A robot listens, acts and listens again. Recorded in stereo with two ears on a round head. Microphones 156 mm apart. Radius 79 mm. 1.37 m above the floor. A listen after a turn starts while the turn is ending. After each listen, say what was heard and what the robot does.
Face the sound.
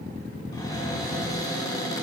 The cupboard door: about 20° left or 160° left. Turn 20° left.
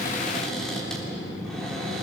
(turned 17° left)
Facing the cupboard door.